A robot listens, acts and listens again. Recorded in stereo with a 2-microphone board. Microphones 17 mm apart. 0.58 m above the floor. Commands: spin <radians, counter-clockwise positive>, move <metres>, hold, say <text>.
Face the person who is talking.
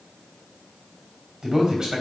spin -0.61
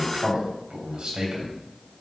spin -1.83
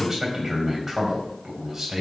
spin -0.52
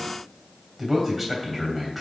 spin -0.26
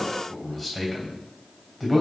say Found it: a man speaking, straight ahead.